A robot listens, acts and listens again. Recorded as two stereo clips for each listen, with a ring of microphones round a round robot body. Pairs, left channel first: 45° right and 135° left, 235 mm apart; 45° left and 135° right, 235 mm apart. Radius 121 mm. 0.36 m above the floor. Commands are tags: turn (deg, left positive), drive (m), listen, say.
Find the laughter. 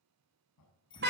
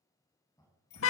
<turn deg="-30"/>
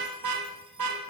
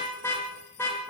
<listen/>
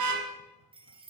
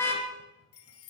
<listen/>
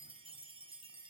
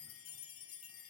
<say>Facing where the laughter came from. I can't hear it now.</say>